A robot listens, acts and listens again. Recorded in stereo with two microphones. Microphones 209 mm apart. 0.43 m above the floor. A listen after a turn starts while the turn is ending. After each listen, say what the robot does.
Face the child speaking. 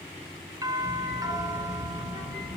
Turn 35° left.
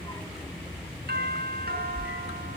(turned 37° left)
Facing the child speaking.